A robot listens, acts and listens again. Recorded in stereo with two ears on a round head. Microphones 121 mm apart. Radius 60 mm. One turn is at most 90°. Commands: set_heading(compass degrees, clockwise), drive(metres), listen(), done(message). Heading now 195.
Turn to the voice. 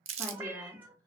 set_heading(165)
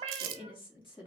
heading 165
set_heading(75)
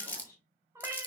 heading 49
set_heading(29)
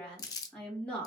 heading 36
done("Facing the woman speaking, 2 to 4 m away.")